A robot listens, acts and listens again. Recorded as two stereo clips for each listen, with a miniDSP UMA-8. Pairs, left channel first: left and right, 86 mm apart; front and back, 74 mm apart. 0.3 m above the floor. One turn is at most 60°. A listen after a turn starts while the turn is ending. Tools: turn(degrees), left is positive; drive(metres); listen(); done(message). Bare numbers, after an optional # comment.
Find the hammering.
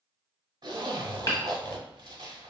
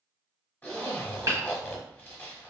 # The hammering: 135° left.
turn(60)
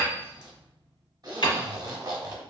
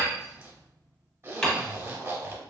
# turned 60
# The hammering is now 80° left.
turn(60)
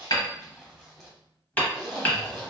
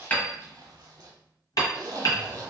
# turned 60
# The hammering is now 20° left.
turn(20)
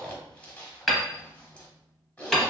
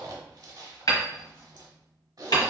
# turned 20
done("Facing the hammering, under 1 m away.")